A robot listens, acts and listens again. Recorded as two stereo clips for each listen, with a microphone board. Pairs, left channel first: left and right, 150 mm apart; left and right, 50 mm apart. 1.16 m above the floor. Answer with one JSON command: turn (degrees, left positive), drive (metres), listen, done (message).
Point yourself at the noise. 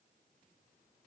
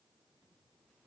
{"listen": true}
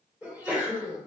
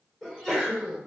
{"turn": -30}
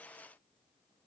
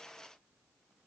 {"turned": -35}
{"listen": true}
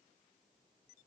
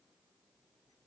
{"done": "I heard a sneeze, but can't make it out now. It was about 25° left or 135° right."}